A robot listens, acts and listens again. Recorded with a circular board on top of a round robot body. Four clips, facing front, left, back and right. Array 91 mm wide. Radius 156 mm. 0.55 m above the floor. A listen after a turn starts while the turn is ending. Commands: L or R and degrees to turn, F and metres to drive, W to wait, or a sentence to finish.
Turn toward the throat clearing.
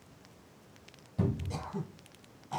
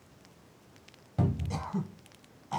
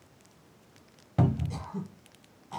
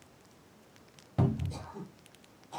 L85
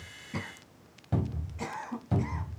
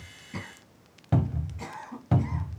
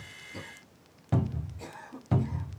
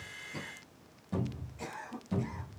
L10
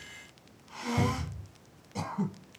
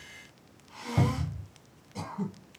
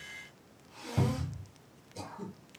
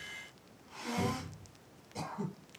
Found it: throat clearing, straight ahead, under 1 m away.